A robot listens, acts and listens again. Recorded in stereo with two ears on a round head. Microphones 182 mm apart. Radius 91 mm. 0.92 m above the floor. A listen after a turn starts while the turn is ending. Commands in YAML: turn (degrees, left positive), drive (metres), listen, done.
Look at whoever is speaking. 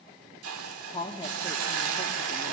turn: 20
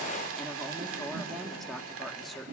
done: "Found it: a woman speaking, straight ahead, 2 to 4 m away."